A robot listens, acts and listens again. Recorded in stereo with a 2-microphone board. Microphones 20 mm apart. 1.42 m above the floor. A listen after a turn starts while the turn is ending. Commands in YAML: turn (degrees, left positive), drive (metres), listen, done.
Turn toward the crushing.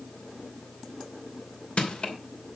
turn: 70
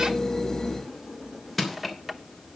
done: "Found it: crushing, straight ahead, 2 to 4 m away."